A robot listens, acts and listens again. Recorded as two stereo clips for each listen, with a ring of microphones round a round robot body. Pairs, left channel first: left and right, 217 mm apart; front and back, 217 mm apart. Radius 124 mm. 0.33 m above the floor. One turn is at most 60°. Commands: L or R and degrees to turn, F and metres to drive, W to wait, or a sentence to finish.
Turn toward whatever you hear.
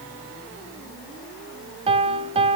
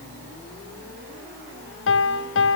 R25
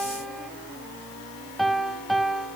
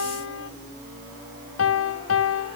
Facing the piano, under 1 m away.